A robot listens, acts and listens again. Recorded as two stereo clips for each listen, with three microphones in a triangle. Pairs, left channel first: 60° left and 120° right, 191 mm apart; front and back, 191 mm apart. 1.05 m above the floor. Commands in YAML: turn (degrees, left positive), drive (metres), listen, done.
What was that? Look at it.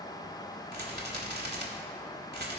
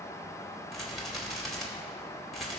turn: -90
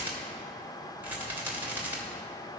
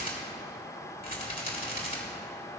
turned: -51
turn: -40
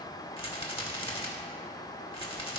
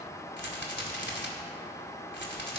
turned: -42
done: "Facing the rattle."